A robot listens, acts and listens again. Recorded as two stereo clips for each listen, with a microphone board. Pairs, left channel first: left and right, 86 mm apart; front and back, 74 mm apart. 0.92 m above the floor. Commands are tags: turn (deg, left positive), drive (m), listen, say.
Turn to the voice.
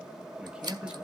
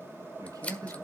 <turn deg="-165"/>
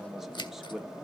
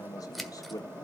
<say>Facing the man speaking.</say>